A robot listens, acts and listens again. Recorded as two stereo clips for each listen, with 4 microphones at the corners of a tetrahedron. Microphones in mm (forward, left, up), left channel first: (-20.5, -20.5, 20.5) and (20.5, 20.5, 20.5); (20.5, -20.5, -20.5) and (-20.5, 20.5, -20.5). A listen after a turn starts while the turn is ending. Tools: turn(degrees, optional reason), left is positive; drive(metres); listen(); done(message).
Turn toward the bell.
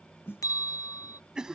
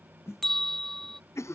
turn(degrees=-130, reason="The bell: 130° right.")
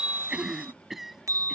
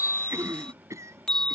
turn(degrees=30, reason="The bell is now 30° left.")
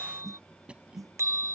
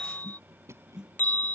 turn(degrees=15, reason="The bell is now 15° left.")
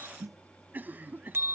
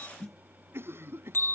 done("Found it: a bell, straight ahead.")